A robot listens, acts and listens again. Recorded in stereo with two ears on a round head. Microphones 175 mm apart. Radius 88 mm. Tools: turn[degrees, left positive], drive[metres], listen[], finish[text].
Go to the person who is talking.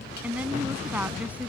Action: turn[-30]
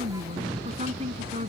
Thought: So it is at 140° right.
Action: turn[-140]
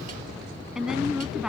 Action: drive[1.0]
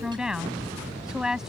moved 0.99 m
Action: drive[1.0]
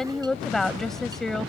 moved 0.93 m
Action: drive[1.0]
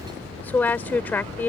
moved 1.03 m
Thought: The woman speaking is now 15° left.
Action: turn[15]
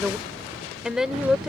Action: drive[1.0]
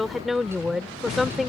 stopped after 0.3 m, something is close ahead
Action: finish[I am next to the woman speaking.]